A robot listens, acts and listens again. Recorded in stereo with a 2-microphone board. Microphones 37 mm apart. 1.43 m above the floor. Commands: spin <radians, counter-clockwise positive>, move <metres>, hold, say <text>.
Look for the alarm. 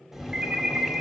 spin -0.44
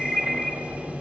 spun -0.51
say Facing the alarm, 1 to 2 m away.